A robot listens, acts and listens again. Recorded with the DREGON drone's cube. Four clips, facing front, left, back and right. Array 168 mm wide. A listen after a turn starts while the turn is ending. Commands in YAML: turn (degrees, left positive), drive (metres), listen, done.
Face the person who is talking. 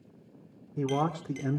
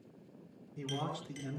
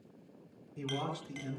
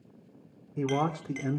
turn: -45
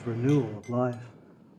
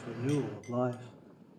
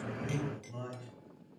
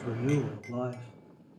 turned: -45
turn: 15
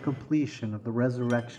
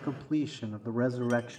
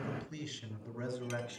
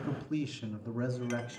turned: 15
turn: 45
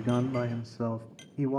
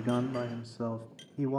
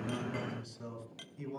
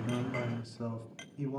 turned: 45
turn: 40
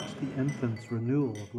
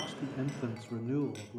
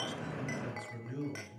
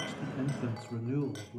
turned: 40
turn: 10
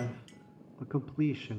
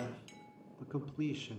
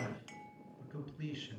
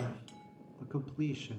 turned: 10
done: "Found it: a man speaking, straight ahead."